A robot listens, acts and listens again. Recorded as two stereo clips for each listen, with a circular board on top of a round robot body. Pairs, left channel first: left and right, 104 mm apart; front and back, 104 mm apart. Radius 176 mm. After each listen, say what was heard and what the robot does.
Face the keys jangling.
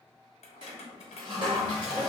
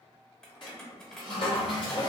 The keys jangling: 85° left. Turn 85° left.
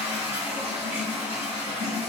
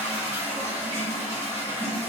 Keep listening.
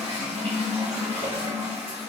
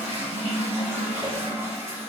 Keep listening.
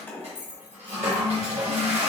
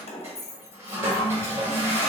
The keys jangling is now 20° left. Turn 20° left.
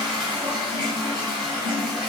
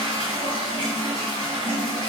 Keep listening.
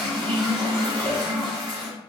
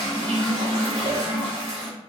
Keep listening.
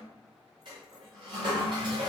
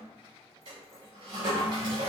I heard keys jangling from this way, but can't make it out now.